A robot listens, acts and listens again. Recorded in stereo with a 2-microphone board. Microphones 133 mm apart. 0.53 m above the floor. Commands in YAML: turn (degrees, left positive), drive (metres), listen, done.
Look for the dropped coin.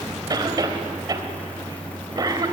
listen: true
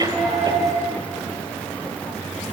turn: 30
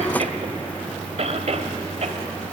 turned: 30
listen: true
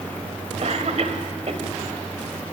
done: "I heard a dropped coin, but can't make it out now. It was about 30° right or 150° left."